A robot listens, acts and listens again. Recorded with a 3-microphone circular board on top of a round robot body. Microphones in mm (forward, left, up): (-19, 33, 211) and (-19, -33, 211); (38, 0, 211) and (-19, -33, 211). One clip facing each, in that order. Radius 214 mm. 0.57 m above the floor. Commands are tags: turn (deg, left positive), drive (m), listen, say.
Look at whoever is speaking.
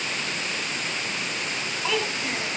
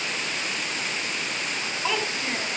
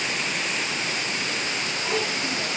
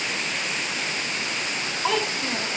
<turn deg="-170"/>
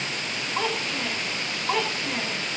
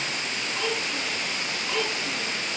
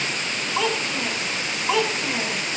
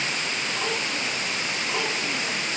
<turn deg="40"/>
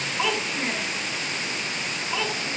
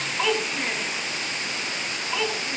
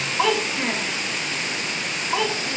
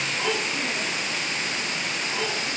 <say>Facing the child speaking, over 4 m away.</say>